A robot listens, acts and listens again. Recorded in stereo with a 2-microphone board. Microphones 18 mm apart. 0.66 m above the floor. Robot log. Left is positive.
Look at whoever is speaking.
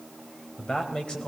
note: The man speaking: about 60° left or 120° left.
cmd yaw +60
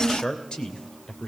note: So it is at 60° left.
cmd yaw +60
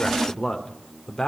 note: The man speaking is now 50° left.
cmd yaw +50
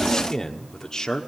note: The man speaking is now 40° left.
cmd yaw +40
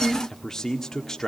note: The man speaking is now 30° left.
cmd yaw +30
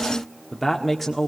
end: Found it: a man speaking, straight ahead, 1 to 2 m away.